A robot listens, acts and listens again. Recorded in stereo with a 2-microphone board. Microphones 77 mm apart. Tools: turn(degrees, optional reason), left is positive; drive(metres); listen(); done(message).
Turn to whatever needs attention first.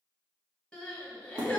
turn(degrees=30)
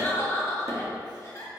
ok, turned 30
turn(degrees=135, reason="So it is at 135° left.")
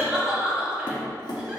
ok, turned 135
turn(degrees=-15, reason="The crying is now 15° right.")
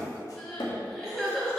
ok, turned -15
done("Facing the crying, 1 to 2 m away.")